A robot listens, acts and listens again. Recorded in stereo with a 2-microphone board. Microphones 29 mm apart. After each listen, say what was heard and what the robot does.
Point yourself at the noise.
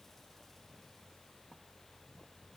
Keep listening.
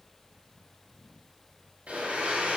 The blender: about 55° right or 125° right. Turn 55° right.
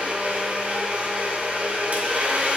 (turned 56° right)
So it is at 65° right. Turn 65° right.
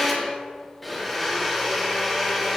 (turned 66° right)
Found it: a blender, straight ahead.